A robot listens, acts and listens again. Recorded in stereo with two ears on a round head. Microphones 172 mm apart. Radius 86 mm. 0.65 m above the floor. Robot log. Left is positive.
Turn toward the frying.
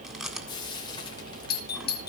note: The frying: about 25° left or 155° left.
cmd yaw +25
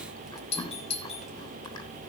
cmd idle
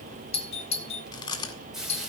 end: Found it: frying, straight ahead.